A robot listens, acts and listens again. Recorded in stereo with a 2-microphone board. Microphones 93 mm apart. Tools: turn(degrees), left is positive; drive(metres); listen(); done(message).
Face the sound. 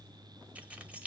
turn(degrees=-30)
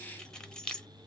turn(degrees=10)
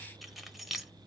done("Facing the keys jangling, under 1 m away.")